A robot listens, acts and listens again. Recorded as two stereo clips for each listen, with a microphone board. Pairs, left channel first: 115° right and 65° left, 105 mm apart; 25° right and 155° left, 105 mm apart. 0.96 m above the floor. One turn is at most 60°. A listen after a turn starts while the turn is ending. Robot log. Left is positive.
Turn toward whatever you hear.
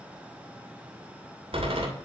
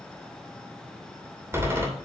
note: The door slam: 90° left.
cmd yaw +60
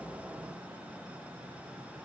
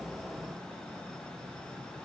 note: Nothing new. It was at 30° left.
cmd yaw +30
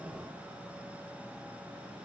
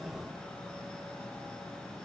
end: I heard a door slam from this way, but can't make it out now.